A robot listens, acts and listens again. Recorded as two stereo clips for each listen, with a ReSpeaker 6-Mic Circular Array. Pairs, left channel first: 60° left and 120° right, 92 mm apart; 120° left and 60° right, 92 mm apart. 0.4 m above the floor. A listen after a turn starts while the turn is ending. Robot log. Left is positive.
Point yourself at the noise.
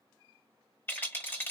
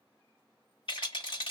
note: The rattle: 125° left.
cmd yaw +125
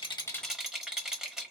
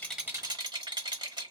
note: The rattle is now 35° right.
cmd yaw -35
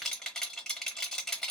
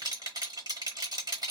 note: The rattle is now 25° right.
cmd yaw -25
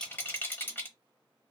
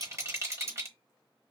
end: Facing the rattle, 1 to 2 m away.